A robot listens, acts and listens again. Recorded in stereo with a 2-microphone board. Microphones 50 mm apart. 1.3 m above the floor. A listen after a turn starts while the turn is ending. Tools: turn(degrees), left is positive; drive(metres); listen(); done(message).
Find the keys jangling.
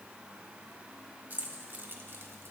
turn(degrees=-45)
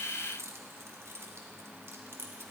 turn(degrees=-55)
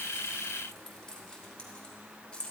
turn(degrees=20)
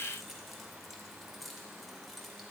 done("Facing the keys jangling, 2 to 4 m away.")